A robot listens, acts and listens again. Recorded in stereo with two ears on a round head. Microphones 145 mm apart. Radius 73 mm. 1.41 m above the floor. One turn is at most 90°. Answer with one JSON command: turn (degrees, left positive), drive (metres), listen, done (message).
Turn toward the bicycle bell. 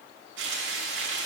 {"listen": true}
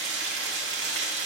{"listen": true}
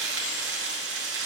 {"done": "I can't make out a bicycle bell, only frying."}